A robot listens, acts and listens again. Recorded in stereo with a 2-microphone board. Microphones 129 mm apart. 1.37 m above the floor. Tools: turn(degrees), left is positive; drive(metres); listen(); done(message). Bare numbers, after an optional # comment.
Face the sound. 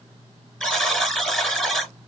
turn(30)
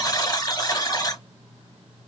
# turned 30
# So it is at 145° left.
turn(145)
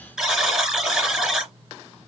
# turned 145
done("Found it: a buzzer, straight ahead.")